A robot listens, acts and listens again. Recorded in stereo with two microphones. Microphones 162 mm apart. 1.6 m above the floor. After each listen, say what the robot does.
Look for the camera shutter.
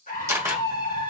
Turn 15° right.
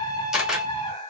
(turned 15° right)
Found it: a camera shutter, straight ahead, 1 to 2 m away.